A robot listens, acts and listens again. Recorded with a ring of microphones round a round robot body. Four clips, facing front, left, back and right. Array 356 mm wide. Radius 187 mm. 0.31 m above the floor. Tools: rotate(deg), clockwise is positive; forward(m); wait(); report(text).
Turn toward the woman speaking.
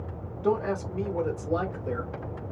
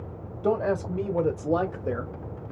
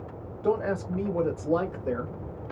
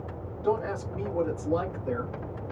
rotate(-120)
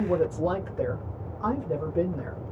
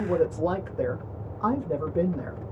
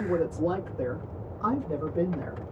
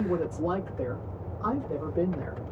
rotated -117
rotate(-85)
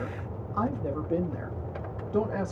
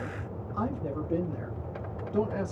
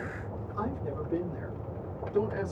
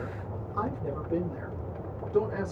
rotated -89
report("Found it: a woman speaking, straight ahead.")